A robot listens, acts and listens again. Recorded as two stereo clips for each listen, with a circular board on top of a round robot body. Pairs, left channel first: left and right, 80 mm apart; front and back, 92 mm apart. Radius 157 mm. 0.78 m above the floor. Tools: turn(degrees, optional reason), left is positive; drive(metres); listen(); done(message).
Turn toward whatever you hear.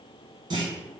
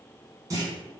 turn(degrees=-125, reason="The clunk: 125° right.")
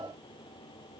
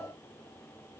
done("I heard a clunk from this way, but can't make it out now.")